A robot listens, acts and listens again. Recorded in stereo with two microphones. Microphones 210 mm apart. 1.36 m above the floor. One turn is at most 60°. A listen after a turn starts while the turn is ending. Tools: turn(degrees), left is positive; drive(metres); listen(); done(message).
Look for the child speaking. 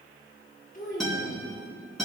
turn(degrees=40)
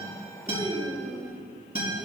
done("Facing the child speaking.")